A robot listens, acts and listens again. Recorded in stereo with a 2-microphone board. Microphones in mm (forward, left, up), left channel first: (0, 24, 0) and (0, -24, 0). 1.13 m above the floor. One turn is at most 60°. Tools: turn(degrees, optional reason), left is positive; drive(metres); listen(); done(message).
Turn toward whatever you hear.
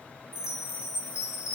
turn(degrees=60)
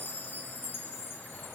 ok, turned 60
turn(degrees=45, reason="So it is at 45° left.")
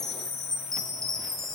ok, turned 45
turn(degrees=10, reason="The chime is now 10° left.")
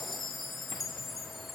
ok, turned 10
done("Found it: a chime, straight ahead, 2 to 4 m away.")